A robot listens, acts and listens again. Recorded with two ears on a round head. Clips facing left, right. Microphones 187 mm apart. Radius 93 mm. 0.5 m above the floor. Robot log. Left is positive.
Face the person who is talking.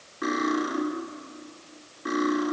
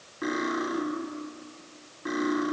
cmd idle
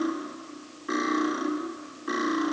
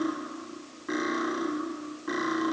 cmd idle
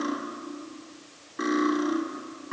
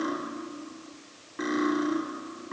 end: I can't make out anyone speaking, only cutlery clinking.